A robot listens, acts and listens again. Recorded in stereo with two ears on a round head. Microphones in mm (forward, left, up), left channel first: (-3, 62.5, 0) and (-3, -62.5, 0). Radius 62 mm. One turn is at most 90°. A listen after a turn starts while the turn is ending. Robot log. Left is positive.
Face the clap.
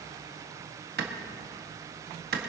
cmd yaw -90
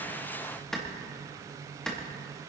end: Facing the clap.